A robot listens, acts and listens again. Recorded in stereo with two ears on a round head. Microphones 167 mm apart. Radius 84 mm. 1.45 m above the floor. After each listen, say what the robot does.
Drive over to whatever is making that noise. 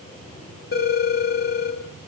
Turn 55° left.
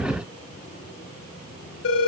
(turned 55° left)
Turn 65° left.
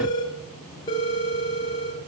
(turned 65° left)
Turn 25° left.
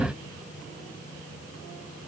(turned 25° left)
Keep listening.
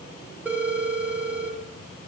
Turn 10° right.
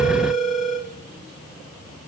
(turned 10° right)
Drive 1.0 m forward.
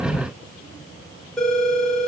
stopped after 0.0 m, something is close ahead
Blocked. The phone ringing is further on, straight ahead.